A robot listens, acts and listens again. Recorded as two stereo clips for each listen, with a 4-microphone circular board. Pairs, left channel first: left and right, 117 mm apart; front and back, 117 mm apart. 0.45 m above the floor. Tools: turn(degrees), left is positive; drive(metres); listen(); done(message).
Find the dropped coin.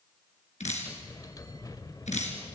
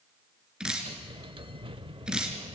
listen()
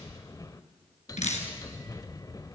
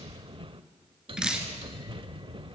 listen()
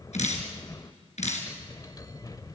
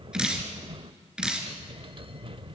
done("I can't make out a dropped coin to turn to.")